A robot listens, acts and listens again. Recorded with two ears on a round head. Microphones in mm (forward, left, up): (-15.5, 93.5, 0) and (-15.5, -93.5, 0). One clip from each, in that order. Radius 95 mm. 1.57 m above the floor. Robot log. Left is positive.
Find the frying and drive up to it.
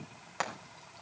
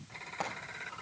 note: The frying: about 50° left or 130° left.
cmd yaw +50
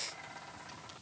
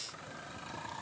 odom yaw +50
cmd idle
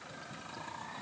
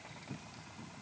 cmd idle
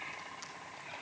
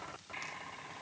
end: I heard frying, but can't make it out now. It was about straight ahead or 80° left. I did not reach it.